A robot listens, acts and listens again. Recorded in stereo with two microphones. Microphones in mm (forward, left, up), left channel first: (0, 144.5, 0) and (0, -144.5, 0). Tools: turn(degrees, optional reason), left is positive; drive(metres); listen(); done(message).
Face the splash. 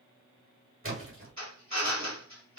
turn(degrees=-45, reason="The splash: about 45° right or 135° right.")
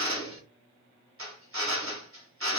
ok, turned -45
listen()
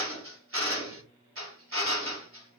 done("I heard a splash, but can't make it out now. It was about straight ahead or 90° right.")